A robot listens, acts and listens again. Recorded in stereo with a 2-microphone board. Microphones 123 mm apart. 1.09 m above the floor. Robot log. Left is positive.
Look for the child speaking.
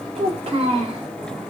note: The child speaking: about 50° right or 130° right.
cmd yaw -50
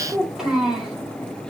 end: Found it: a child speaking, straight ahead.